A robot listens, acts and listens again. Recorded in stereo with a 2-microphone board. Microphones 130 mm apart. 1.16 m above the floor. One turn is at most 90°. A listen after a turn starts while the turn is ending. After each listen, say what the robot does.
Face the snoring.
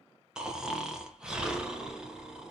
Turn 30° right.
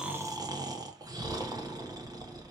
Turn 90° right.
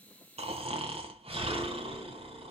Turn 60° right.
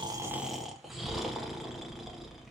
Facing the snoring, under 1 m away.